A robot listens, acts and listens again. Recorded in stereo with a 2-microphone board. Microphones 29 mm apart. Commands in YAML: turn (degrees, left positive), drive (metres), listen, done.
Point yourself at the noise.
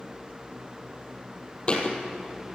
turn: 35
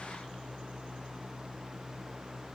listen: true
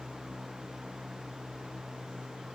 done: "I heard a thud, but can't make it out now. It was about straight ahead or 110° left."